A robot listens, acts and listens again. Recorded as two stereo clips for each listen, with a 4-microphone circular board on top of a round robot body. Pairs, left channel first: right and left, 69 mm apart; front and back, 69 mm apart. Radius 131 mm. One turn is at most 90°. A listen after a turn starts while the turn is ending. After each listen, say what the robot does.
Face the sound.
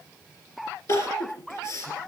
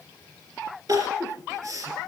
Turn 90° right.
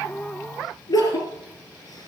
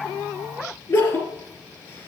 Turn 55° right.
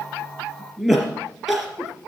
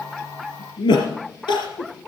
Found it: crying, straight ahead.